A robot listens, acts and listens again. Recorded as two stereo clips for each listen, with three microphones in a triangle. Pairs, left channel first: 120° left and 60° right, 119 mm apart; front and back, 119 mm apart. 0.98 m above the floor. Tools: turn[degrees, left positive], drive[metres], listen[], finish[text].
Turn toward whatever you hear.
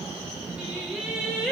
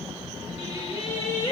Thought: The singing: 30° left.
Action: turn[30]
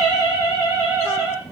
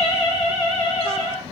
Thought: The singing is now 10° left.
Action: turn[10]
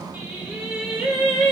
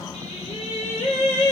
Thought: The singing is now 25° left.
Action: turn[25]
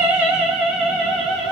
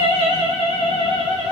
Thought: The singing is now 30° left.
Action: turn[30]
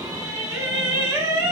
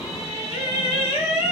Action: finish[Facing the singing, 2 to 4 m away.]